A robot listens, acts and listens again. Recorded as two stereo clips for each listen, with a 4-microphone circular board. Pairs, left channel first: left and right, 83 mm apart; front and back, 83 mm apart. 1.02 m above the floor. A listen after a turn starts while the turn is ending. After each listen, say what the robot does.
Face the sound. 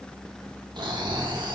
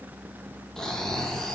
Turn 80° right.
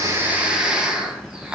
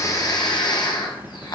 Turn 15° right.
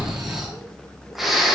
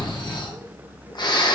Facing the snoring, 1 to 2 m away.